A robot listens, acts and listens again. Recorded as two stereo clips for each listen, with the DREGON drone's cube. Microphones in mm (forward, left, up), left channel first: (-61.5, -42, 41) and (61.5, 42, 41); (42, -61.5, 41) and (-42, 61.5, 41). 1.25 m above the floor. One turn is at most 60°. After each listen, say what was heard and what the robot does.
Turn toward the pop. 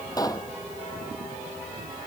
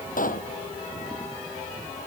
The pop: 80° right. Turn 60° right.
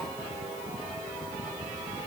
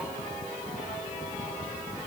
Nothing new. It was at 20° right. Turn 20° right.
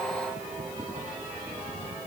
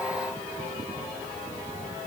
I heard a pop from this way, but can't make it out now.